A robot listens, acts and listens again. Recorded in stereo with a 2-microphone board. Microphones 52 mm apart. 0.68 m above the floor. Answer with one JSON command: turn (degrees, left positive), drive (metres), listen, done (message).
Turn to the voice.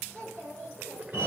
{"turn": -70}
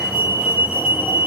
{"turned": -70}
{"listen": true}
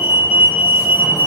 {"listen": true}
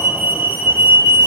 {"done": "I heard a child speaking, but can't make it out now. It was about straight ahead or 40° right."}